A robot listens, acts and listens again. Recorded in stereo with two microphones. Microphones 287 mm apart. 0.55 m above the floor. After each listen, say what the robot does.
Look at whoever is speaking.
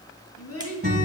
Turn 60° left.
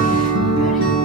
Keep listening.
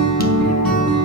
Keep listening.
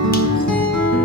I heard a child speaking, but can't make it out now. It was about straight ahead or 60° left.